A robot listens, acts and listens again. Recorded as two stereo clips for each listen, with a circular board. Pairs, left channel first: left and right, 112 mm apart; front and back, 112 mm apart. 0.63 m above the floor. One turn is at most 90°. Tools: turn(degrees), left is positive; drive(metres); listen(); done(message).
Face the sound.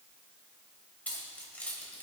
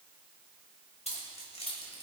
turn(degrees=15)
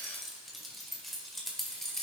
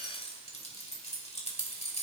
done("Found it: keys jangling, straight ahead.")